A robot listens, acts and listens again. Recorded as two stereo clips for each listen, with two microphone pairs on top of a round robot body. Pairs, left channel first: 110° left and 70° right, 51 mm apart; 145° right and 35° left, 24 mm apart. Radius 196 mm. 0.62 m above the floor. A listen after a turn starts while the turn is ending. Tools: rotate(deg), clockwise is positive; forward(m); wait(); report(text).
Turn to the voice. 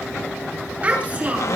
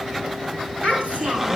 rotate(10)
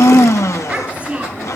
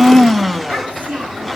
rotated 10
report("Facing the child speaking.")